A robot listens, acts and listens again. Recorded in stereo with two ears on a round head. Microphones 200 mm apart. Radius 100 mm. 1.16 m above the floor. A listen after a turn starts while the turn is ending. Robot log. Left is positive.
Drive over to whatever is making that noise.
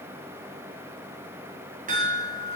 note: The chime: about 40° right or 140° right.
cmd yaw -40
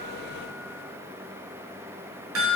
note: So it is at 100° right.
cmd yaw -100
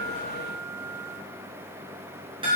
note: The chime is now 25° right.
cmd yaw -25
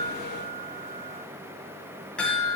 cmd fwd 1.0
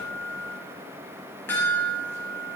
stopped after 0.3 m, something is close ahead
note: The chime is now 10° left.
cmd yaw +10
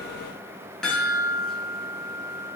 end: Something is in my way. I am facing the chime but have not reached it.